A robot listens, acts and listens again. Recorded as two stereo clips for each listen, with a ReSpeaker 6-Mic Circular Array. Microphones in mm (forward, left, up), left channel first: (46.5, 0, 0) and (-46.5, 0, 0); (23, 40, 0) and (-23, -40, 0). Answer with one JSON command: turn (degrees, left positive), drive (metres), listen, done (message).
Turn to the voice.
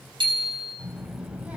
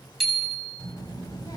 {"turn": 105}
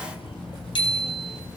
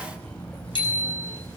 {"turn": -15}
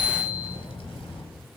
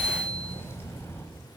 {"done": "Found it: a child speaking, straight ahead."}